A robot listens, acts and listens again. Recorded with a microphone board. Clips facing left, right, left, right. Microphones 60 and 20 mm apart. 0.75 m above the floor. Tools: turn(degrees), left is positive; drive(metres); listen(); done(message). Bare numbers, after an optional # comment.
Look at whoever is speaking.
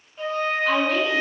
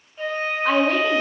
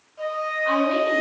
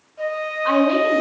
# The woman speaking: about 55° right or 125° right.
turn(-55)
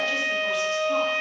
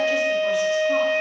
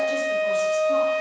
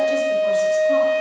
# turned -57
listen()
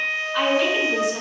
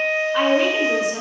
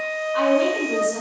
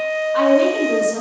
# So it is at 25° right.
turn(-25)
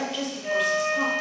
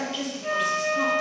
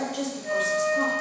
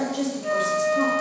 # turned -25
done("Found it: a woman speaking, straight ahead.")